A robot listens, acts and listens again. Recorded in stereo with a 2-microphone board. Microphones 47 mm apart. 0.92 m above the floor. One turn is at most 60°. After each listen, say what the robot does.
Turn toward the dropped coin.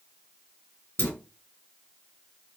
Turn 60° left.
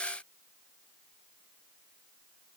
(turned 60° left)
Keep listening.
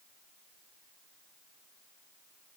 I heard a dropped coin, but can't make it out now. It was about straight ahead or 60° left.